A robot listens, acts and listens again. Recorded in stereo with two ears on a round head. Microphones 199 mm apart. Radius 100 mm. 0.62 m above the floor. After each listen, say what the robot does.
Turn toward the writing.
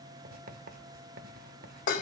Turn 45° right.
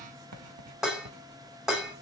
Turn 90° right.
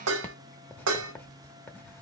Turn 10° left.
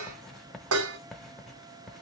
Found it: writing, straight ahead.